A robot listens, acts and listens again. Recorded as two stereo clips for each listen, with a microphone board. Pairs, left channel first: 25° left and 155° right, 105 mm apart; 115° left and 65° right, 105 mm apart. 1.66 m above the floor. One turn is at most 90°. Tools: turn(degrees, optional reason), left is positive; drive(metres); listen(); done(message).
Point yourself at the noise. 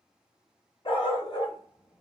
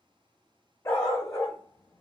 turn(degrees=55, reason="The dog barking: 55° left.")
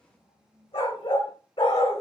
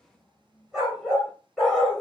turn(degrees=25, reason="The dog barking is now 25° left.")
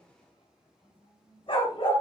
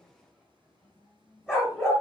turn(degrees=20, reason="The dog barking is now 20° left.")
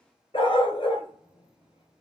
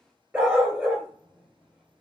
done("Found it: a dog barking, straight ahead.")